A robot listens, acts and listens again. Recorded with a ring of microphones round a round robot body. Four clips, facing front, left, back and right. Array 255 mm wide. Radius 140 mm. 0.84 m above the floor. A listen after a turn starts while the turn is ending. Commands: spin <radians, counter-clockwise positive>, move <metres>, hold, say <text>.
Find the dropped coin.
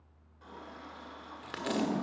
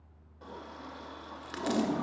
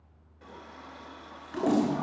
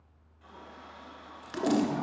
spin 0.17
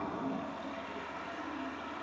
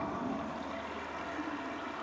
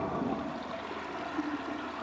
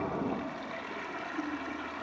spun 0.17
say I heard a dropped coin from this way, but can't make it out now.